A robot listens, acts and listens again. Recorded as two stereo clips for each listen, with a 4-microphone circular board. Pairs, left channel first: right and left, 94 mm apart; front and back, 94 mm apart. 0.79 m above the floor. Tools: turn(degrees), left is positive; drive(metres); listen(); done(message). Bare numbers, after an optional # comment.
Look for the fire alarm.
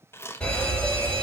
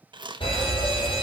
# The fire alarm: 10° right.
turn(-10)
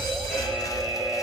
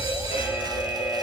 done("Facing the fire alarm.")